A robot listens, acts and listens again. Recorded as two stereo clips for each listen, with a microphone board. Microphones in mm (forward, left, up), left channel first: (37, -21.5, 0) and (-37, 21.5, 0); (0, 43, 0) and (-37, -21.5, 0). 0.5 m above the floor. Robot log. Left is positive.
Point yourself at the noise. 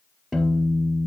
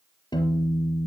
note: The piano: 65° left.
cmd yaw +65
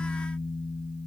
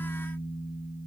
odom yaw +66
end: Facing the piano.